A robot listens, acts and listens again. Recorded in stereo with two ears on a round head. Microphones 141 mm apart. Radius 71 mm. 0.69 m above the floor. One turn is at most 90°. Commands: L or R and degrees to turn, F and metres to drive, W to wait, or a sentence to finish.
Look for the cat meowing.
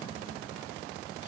W
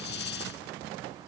W
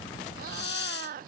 R60
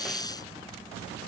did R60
W
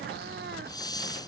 W
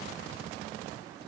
I heard a cat meowing, but can't make it out now. It was about straight ahead or 60° right.